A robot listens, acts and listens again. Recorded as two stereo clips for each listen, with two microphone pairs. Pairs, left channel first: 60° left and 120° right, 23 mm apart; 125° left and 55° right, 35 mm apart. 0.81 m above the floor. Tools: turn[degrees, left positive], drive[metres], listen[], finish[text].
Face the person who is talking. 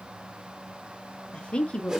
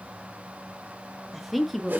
Thought: The woman speaking: 35° left.
Action: turn[35]
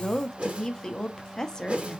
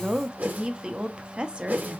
Action: finish[Found it: a woman speaking, straight ahead.]